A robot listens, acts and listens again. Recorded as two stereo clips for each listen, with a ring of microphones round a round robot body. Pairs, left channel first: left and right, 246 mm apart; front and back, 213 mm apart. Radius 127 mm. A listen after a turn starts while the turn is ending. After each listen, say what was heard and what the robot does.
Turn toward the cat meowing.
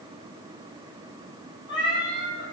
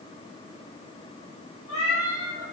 The cat meowing: 20° left. Turn 20° left.
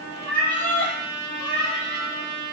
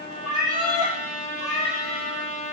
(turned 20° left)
The cat meowing is now 10° left. Turn 10° left.
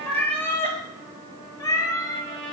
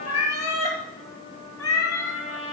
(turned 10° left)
The cat meowing is now 15° left. Turn 15° left.
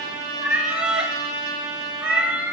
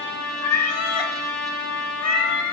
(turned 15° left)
Facing the cat meowing, 2 to 4 m away.